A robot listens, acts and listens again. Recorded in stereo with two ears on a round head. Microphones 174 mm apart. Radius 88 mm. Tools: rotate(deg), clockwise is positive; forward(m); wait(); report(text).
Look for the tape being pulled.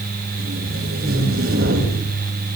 rotate(70)
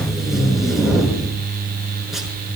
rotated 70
report("Facing the tape being pulled, over 4 m away.")